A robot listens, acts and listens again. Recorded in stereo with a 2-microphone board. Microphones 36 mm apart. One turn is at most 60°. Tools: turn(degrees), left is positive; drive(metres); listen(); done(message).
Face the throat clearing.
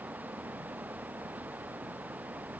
listen()
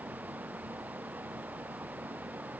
listen()
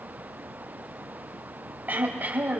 turn(degrees=-55)
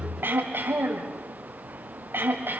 turn(degrees=-60)
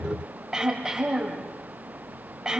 turn(degrees=-20)
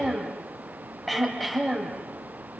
done("Found it: throat clearing, straight ahead, over 4 m away.")